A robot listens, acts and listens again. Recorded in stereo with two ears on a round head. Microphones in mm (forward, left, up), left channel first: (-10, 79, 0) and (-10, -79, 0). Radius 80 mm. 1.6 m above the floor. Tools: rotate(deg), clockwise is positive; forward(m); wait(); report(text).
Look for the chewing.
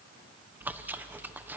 rotate(30)
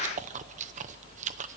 rotate(140)
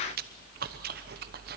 rotate(50)
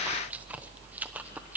rotate(10)
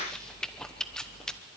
report("Found it: chewing, straight ahead, under 1 m away.")